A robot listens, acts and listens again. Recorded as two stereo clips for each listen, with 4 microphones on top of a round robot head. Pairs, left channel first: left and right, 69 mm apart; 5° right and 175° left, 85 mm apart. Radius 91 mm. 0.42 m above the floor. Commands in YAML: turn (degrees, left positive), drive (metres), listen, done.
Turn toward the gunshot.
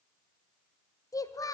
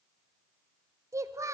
listen: true
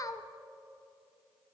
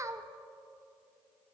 listen: true
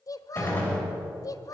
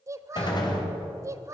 turn: 25
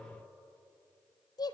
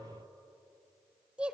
done: "I heard a gunshot from this way, but can't make it out now."